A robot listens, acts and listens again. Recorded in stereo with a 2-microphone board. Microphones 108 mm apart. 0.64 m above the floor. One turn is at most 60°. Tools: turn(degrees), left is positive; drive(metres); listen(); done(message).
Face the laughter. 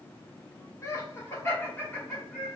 turn(degrees=30)
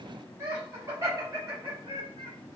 turn(degrees=-40)
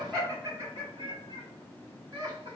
turn(degrees=-40)
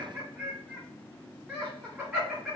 done("Found it: laughter, straight ahead, 2 to 4 m away.")